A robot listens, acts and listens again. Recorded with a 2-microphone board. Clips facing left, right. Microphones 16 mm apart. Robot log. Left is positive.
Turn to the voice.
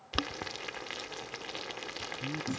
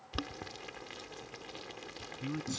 note: The man speaking: about 35° right or 145° right.
cmd yaw -35
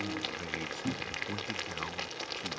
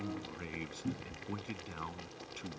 end: Found it: a man speaking, straight ahead.